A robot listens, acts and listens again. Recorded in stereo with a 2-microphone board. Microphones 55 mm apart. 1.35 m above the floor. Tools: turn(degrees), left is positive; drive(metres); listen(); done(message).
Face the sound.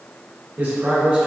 turn(degrees=-20)
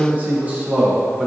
turn(degrees=-30)
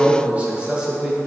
turn(degrees=-30)
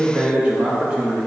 turn(degrees=-15)
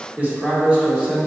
turn(degrees=-20)
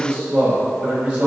turn(degrees=-40)
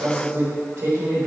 turn(degrees=-105)
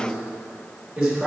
turn(degrees=-10)
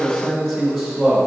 done("Facing the man speaking.")